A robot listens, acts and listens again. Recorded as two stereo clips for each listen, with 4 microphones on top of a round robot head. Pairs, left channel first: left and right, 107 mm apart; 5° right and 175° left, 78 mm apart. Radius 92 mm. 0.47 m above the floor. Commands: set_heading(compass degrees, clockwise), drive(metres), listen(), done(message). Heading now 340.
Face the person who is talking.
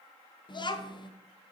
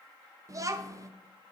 set_heading(205)
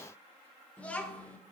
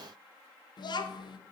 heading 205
set_heading(190)
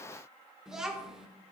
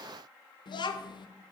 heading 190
done("Found it: a child speaking, straight ahead, under 1 m away.")